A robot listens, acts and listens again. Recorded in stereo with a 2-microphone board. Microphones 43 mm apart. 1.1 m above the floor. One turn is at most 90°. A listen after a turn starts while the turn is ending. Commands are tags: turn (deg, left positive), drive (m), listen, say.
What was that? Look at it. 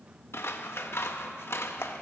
<turn deg="90"/>
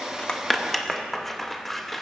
<say>Found it: scissors, straight ahead, under 1 m away.</say>